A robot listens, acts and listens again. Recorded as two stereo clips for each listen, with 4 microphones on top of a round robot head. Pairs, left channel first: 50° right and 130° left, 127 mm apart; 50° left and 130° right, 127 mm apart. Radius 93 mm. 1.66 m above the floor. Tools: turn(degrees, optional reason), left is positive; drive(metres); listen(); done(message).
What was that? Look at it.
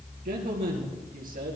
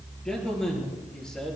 turn(degrees=135, reason="The man speaking: 135° left.")
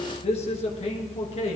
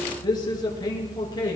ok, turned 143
turn(degrees=-10, reason="The man speaking is now 10° right.")
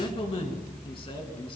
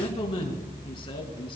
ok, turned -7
done("Facing the man speaking.")